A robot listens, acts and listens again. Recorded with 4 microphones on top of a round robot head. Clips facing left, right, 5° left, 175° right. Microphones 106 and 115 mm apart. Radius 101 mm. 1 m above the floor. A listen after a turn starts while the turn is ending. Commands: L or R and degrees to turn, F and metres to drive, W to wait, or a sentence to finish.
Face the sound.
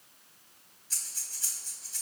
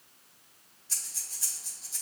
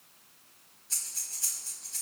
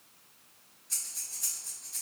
R90
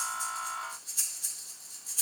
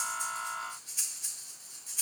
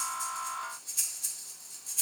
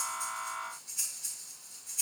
L15
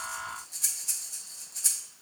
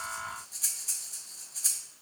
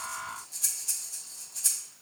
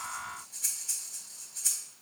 Found it: breathing, straight ahead, 1 to 2 m away.